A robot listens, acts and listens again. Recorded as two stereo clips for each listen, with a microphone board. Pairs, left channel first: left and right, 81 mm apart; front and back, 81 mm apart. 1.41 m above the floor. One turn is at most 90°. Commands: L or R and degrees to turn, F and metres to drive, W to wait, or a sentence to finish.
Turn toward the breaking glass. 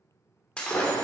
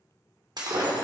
L90
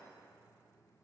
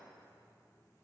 L75
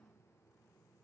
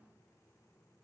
Facing where the breaking glass came from. I can't hear it now.